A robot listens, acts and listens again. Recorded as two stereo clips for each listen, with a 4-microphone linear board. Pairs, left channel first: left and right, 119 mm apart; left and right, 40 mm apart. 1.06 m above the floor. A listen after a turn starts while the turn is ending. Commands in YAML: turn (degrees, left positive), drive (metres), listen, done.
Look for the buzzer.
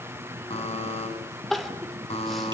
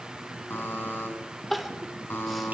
turn: 65
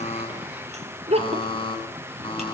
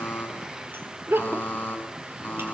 turn: 50
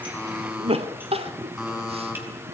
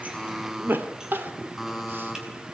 done: "Found it: a buzzer, straight ahead, over 4 m away."